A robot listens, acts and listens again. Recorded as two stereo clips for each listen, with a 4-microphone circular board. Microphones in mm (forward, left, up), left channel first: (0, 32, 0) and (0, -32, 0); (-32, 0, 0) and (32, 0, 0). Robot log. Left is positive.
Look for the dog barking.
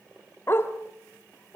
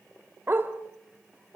note: The dog barking: 45° left.
cmd yaw +45
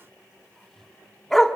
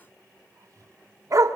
end: Found it: a dog barking, straight ahead.